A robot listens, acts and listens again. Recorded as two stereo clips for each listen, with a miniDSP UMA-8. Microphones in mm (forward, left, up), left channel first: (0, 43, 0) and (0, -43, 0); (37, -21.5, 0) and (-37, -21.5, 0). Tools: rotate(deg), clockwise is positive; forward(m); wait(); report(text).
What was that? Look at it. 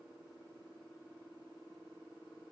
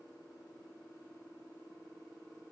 wait()
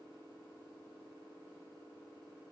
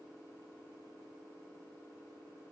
wait()
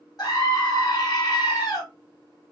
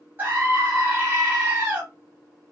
rotate(-120)
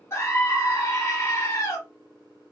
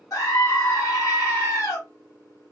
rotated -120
rotate(-35)
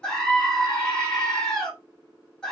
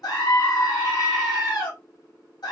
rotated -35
report("Facing the scream, 1 to 2 m away.")